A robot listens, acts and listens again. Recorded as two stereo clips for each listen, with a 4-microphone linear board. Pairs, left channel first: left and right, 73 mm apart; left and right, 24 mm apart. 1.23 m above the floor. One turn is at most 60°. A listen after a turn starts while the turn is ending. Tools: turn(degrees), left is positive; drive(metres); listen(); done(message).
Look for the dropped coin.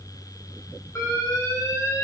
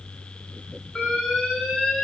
listen()
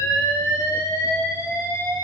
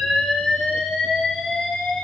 listen()
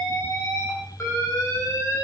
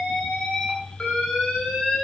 done("I can't make out a dropped coin to turn to.")